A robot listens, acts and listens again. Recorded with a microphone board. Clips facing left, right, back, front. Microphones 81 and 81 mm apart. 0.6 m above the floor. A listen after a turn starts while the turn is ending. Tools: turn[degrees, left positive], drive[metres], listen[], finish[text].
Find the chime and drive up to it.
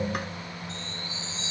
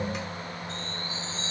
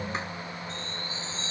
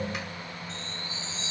Thought: The chime: 135° right.
Action: turn[-135]
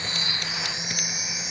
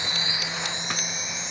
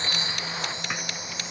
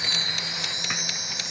Action: drive[1.0]
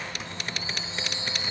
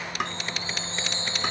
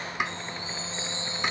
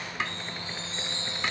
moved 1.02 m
Thought: The chime is now 15° left.
Action: turn[15]
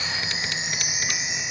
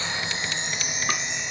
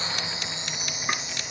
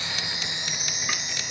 Action: drive[1.0]
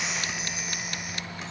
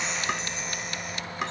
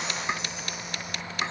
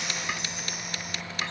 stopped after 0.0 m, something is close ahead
Action: listen[]
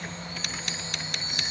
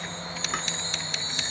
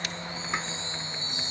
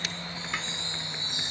Action: finish[Blocked. The chime is further on, straight ahead.]